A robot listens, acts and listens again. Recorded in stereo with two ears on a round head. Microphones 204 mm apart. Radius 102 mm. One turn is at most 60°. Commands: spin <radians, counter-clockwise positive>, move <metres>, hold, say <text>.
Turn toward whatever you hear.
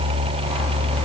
hold
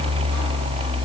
hold
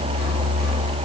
say I can't make out anything to turn to.